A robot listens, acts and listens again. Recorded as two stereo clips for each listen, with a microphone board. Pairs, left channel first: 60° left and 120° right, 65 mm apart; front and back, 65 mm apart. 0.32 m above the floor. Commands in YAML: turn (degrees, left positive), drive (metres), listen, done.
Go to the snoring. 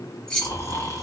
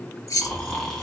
turn: 80
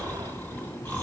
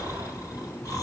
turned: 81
drive: 1.0
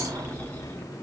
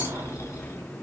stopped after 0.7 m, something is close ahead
done: "I am next to the snoring."